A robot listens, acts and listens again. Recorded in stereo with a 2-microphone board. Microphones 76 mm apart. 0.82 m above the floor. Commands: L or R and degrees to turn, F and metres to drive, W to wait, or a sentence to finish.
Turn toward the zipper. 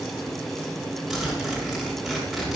R30
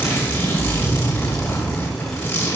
L25
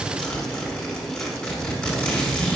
L10
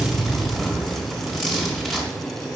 Facing the zipper, over 4 m away.